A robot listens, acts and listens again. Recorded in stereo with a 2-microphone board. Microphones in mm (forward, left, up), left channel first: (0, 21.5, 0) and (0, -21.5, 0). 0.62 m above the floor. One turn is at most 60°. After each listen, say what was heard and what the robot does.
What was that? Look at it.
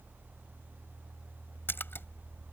The splash: about 60° left or 120° left. Turn 60° left.
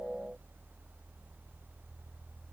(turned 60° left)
Keep listening.
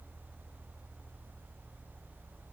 I heard a splash, but can't make it out now. It was about straight ahead or 60° left.